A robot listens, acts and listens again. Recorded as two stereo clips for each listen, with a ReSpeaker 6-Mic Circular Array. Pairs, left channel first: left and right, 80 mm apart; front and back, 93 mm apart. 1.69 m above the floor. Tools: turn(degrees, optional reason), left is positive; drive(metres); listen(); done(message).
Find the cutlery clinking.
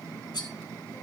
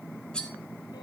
turn(degrees=80, reason="The cutlery clinking: 80° left.")
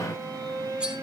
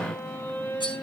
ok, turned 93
turn(degrees=-15, reason="Nothing new. It was at 15° right.")
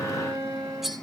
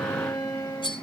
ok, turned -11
done("Found it: cutlery clinking, straight ahead, 2 to 4 m away.")